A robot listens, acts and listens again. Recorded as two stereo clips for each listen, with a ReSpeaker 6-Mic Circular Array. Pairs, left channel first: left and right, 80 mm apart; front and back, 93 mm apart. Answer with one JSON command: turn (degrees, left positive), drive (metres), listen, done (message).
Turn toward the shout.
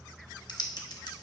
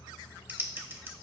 {"listen": true}
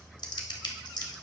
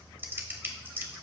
{"listen": true}
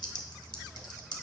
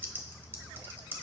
{"done": "I can't make out a shout, only typing on a keyboard."}